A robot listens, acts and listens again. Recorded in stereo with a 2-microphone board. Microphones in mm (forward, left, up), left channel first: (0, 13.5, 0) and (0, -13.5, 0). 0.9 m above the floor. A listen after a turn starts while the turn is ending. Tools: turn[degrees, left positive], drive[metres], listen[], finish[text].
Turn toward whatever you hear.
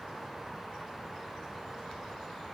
Action: listen[]
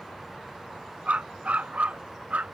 Action: turn[-90]
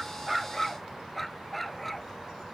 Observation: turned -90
Action: finish[Facing the dog barking.]